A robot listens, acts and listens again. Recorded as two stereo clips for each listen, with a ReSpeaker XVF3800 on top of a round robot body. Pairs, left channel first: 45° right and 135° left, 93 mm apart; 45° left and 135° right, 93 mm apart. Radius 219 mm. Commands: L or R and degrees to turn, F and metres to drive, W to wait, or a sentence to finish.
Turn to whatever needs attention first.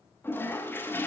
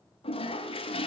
W
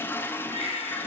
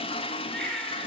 R40
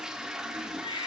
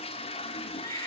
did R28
R10
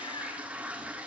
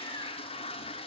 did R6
W
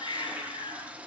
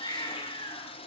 Found it: a baby crying, straight ahead.